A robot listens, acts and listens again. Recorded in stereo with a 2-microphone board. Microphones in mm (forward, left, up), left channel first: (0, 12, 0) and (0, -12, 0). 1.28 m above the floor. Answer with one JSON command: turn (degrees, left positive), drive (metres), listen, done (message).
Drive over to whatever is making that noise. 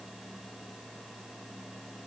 {"listen": true}
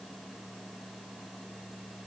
{"listen": true}
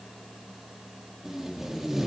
{"turn": -30}
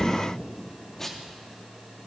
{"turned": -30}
{"turn": 15}
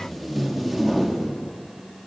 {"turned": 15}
{"drive": 1.0}
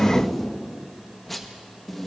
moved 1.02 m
{"turn": 10}
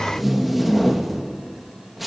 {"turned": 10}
{"drive": 1.0}
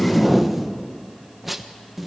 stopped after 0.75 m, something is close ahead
{"done": "I am next to the tape being pulled."}